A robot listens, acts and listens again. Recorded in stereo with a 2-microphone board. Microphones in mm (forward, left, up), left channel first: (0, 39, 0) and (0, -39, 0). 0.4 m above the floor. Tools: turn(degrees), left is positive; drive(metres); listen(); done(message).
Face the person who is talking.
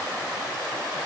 listen()
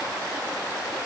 listen()
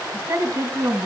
turn(degrees=-30)
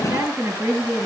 done("Found it: a woman speaking, straight ahead.")